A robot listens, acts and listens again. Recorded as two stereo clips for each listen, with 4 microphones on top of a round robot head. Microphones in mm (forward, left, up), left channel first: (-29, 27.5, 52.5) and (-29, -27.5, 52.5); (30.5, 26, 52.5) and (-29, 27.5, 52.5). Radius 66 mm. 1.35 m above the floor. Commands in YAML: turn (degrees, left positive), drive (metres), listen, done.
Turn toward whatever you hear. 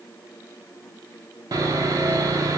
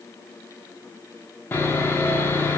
turn: -60
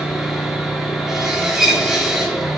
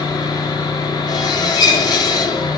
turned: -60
done: "Found it: sawing, straight ahead."